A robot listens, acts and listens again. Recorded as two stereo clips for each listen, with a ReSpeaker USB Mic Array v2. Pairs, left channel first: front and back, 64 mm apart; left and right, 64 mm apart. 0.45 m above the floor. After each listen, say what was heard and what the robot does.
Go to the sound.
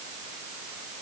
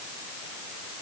Keep listening.
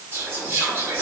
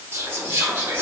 The whispering: 145° right. Turn 145° right.
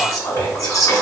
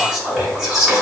The whispering is now 15° right. Turn 15° right.
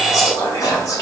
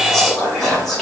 Drive 1.0 m forward.
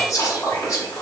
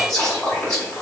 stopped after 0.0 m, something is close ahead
Blocked. The whispering is further on, straight ahead.